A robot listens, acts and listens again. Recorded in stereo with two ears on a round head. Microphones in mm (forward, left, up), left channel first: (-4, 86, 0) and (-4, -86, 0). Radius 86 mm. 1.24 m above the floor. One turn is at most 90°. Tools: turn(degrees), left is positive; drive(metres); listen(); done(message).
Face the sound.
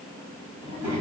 turn(degrees=-30)
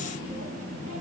turn(degrees=-90)
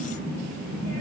turn(degrees=-50)
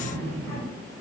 turn(degrees=15)
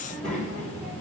done("Facing the child speaking, over 4 m away.")